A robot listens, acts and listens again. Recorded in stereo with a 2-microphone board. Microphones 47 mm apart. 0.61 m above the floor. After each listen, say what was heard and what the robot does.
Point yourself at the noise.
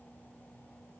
Keep listening.
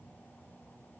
Keep listening.
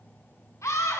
Turn 90° left.
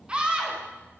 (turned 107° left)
So it is at 20° right. Turn 20° right.
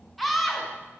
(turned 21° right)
Facing the scream, over 4 m away.